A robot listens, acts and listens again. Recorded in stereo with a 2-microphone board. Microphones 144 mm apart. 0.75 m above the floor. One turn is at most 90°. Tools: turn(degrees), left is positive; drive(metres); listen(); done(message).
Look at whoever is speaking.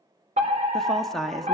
turn(degrees=30)
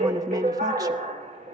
listen()
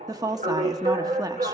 turn(degrees=-30)
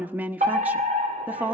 turn(degrees=-15)
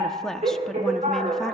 done("Facing the woman speaking.")